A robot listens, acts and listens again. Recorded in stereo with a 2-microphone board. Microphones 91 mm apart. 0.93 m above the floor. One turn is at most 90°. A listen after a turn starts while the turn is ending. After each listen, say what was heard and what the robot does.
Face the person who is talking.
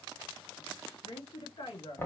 The woman speaking: about 60° left or 120° left. Turn 60° left.
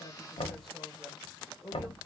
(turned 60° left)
Found it: a woman speaking, straight ahead.